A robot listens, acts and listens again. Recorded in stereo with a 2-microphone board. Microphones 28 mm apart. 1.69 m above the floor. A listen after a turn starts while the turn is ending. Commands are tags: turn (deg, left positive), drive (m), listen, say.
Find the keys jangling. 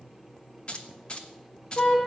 <turn deg="35"/>
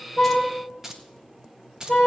<turn deg="-25"/>
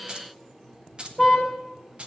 <turn deg="-45"/>
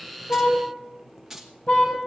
<turn deg="-10"/>
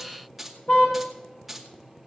<say>Found it: keys jangling, straight ahead, 2 to 4 m away.</say>